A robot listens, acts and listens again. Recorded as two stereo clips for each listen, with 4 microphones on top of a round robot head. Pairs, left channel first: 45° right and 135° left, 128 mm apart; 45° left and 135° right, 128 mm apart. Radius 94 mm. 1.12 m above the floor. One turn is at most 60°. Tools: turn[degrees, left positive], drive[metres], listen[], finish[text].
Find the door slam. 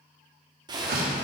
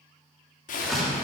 Thought: The door slam: 135° left.
Action: turn[60]
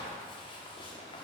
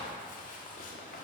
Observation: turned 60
Thought: Nothing new. It was at 75° left.
Action: turn[60]
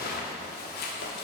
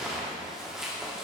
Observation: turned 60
Thought: Nothing new. It was at 15° left.
Action: turn[15]
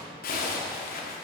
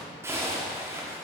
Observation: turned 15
Action: finish[Facing where the door slam came from. I can't hear it now.]